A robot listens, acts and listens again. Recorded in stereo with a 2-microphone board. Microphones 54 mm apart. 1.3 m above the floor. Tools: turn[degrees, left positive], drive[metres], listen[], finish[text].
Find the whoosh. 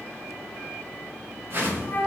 Thought: The whoosh: about 45° right or 135° right.
Action: turn[-45]
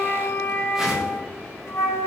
Action: listen[]
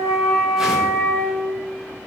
Action: listen[]
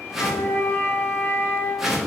Action: finish[Found it: a whoosh, straight ahead.]